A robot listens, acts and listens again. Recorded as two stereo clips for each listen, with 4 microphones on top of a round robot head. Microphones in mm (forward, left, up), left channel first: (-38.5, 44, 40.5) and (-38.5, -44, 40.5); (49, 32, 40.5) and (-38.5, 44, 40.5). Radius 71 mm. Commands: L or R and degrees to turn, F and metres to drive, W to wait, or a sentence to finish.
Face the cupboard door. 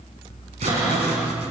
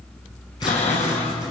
R25
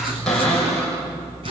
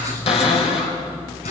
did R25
Found it: a cupboard door, straight ahead.